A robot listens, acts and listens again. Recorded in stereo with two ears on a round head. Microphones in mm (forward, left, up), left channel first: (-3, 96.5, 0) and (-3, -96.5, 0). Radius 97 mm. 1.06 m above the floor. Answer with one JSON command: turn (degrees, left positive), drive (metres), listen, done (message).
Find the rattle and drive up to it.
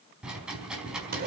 {"turn": -30}
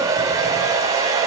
{"listen": true}
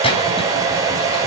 {"turn": 25}
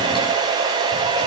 {"listen": true}
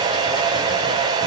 {"listen": true}
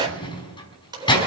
{"turn": 20}
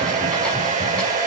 {"listen": true}
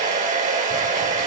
{"listen": true}
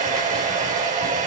{"done": "Facing where the rattle came from. I can't hear it now. I did not reach it."}